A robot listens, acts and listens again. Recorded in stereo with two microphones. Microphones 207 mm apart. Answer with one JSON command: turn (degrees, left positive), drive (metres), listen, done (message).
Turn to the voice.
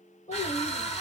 {"turn": 35}
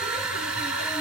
{"listen": true}
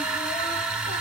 {"listen": true}
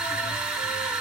{"done": "I heard a child speaking, but can't make it out now. It was about straight ahead or 110° left."}